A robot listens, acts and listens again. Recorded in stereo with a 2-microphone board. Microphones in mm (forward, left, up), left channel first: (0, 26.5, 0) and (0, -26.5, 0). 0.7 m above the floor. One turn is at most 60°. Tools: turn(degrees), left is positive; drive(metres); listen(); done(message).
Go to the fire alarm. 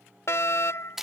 turn(degrees=60)
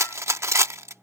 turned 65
listen()
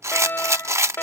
turn(degrees=50)
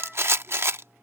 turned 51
listen()
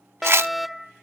drive(metres=1.0)
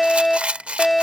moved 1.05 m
drive(metres=1.0)
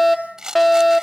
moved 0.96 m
drive(metres=1.0)
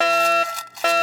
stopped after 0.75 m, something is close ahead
done("I am next to the fire alarm.")